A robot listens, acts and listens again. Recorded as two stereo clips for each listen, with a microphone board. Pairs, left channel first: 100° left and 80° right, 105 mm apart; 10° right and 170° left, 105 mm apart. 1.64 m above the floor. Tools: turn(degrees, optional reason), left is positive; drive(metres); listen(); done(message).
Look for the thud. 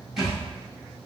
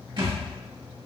turn(degrees=-165, reason="The thud: 165° right.")
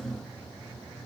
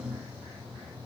done("Facing where the thud came from. I can't hear it now.")